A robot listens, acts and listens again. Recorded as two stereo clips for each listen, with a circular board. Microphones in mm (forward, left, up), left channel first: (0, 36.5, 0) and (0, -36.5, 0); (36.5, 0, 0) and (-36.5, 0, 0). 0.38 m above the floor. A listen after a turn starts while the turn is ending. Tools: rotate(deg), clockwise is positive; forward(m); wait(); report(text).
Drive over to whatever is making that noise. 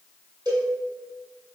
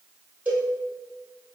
rotate(110)
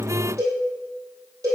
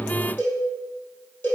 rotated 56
rotate(55)
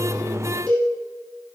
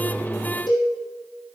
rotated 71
rotate(-15)
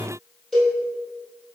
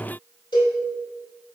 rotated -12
forward(1.0)
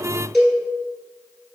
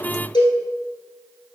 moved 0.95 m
forward(1.0)
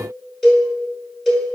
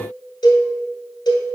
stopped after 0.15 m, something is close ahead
report("I am next to the cowbell.")